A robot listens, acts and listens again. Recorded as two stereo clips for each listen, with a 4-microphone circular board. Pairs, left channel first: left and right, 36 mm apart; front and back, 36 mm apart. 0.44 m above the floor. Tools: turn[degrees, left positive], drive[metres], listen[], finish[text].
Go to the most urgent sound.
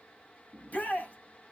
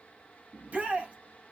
Thought: The shout: 130° left.
Action: turn[130]
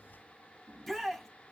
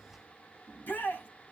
Thought: The shout is now 10° left.
Action: turn[10]
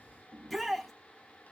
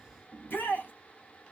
Action: drive[1.0]
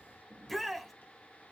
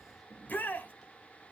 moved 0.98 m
Action: drive[1.0]
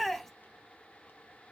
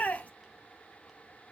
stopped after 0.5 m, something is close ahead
Thought: The shout is now 10° left.
Action: turn[10]
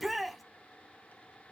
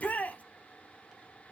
Action: finish[I am next to the shout.]